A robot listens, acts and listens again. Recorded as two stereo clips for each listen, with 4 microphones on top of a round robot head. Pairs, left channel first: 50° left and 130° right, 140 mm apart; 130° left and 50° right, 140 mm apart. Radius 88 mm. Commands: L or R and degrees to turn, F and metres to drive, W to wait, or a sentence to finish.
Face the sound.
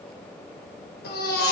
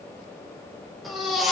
L40
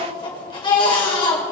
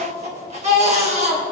R10
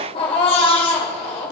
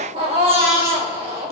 Found it: a baby crying, straight ahead, 2 to 4 m away.